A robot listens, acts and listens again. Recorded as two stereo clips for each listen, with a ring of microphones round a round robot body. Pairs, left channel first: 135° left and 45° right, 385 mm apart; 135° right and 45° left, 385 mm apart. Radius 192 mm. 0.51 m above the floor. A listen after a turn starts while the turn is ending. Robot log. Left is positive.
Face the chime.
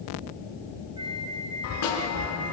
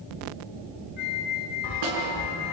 note: The chime: 175° right.
cmd yaw -175
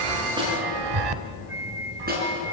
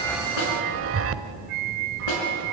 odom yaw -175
note: The chime is now 15° right.
cmd yaw -15
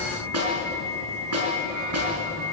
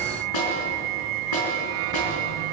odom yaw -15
cmd idle
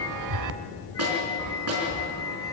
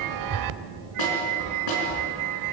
end: Facing the chime.